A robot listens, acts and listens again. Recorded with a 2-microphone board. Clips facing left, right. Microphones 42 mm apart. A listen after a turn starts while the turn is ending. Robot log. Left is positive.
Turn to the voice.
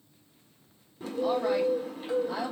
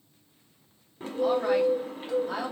note: The woman speaking: about 70° right or 110° right.
cmd yaw -70
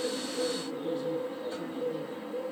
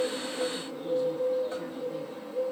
cmd idle
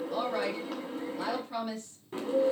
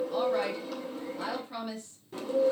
end: Found it: a woman speaking, straight ahead, 2 to 4 m away.